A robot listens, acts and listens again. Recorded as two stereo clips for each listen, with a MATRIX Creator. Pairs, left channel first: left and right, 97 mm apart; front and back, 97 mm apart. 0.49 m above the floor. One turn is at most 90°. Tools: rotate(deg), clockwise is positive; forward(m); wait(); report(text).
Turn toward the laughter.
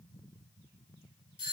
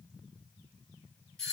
wait()
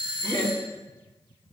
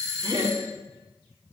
rotate(90)
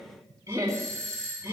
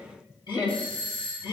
rotate(35)
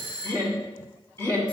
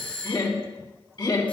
rotate(-30)
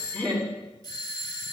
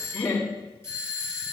rotate(-15)
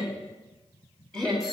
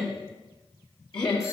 rotate(-10)
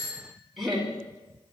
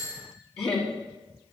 report("Found it: laughter, straight ahead.")